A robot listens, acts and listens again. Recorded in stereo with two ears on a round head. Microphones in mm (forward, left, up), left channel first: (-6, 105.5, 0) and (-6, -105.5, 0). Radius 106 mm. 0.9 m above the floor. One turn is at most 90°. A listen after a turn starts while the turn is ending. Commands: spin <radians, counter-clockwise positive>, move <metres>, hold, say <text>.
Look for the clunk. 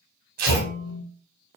spin 0.79
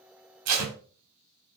hold
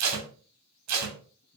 say I heard a clunk, but can't make it out now. It was about straight ahead or 90° left.